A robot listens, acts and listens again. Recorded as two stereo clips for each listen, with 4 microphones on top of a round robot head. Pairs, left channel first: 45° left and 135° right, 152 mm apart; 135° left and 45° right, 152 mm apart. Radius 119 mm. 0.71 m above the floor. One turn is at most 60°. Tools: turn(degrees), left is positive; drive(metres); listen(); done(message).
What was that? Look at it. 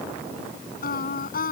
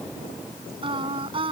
turn(degrees=15)
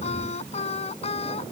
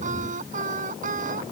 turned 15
done("Found it: singing, straight ahead.")